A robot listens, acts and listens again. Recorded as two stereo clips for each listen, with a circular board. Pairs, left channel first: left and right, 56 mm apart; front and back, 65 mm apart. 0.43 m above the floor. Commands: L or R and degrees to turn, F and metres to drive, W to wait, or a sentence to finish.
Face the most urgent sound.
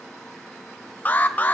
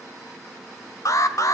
L30
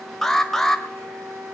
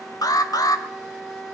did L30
Found it: an alarm, straight ahead.